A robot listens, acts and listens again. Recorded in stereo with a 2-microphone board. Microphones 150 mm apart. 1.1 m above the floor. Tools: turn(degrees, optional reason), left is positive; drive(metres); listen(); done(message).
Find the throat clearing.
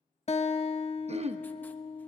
turn(degrees=-45, reason="The throat clearing: about 45° right or 135° right.")
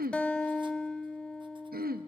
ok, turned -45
turn(degrees=-90, reason="So it is at 90° right.")
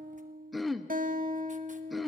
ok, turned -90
done("Facing the throat clearing, under 1 m away.")